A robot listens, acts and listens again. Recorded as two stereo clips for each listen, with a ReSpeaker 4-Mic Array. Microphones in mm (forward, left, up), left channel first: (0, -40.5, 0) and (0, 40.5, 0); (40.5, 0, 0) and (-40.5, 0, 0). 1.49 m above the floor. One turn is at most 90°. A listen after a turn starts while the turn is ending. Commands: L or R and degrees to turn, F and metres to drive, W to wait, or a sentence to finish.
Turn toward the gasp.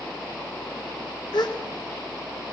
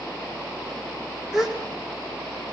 R90
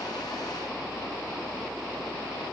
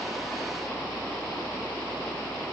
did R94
Facing where the gasp came from. I can't hear it now.